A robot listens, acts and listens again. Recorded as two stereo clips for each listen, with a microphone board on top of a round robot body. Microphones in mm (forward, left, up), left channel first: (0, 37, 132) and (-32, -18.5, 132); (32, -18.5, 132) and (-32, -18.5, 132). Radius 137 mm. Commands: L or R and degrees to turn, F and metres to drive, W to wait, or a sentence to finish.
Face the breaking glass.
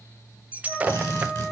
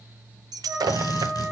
L175
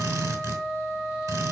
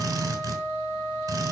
Facing where the breaking glass came from. I can't hear it now.